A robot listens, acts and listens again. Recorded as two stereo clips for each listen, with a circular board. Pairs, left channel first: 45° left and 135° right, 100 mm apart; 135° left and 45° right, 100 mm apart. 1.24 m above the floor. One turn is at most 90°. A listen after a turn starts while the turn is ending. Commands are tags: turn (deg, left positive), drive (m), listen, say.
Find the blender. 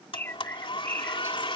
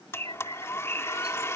<turn deg="75"/>
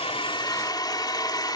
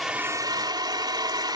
<say>Facing the blender.</say>